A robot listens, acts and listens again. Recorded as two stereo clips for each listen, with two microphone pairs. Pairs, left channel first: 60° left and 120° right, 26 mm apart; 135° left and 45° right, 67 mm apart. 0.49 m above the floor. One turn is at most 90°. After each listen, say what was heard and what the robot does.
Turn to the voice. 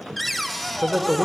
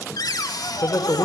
The man speaking: straight behind. Turn 90° left.
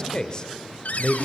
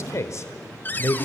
The man speaking is now 110° left. Turn 90° left.
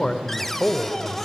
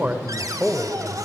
The man speaking is now 15° left. Turn 15° left.
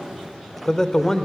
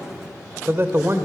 Found it: a man speaking, straight ahead, 1 to 2 m away.